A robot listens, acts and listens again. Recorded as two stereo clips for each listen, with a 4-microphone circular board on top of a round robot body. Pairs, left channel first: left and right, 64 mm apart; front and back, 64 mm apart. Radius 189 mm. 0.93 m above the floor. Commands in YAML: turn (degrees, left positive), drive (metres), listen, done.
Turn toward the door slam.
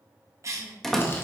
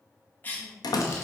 done: "Found it: a door slam, straight ahead."